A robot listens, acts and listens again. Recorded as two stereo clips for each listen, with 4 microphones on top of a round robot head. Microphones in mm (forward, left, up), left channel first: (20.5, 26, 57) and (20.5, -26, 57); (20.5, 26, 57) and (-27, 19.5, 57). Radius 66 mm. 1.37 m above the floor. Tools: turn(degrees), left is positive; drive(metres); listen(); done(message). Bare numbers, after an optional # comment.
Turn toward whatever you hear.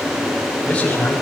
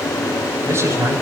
# The man speaking: 160° left.
turn(160)
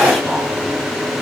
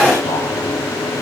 listen()
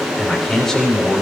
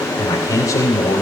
done("Facing the man speaking.")